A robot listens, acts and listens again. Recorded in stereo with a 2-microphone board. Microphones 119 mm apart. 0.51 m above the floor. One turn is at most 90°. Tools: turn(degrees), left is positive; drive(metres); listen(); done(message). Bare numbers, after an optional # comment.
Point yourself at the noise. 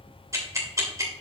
# The ticking: about 30° right or 150° right.
turn(-30)
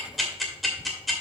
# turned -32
done("Found it: ticking, straight ahead.")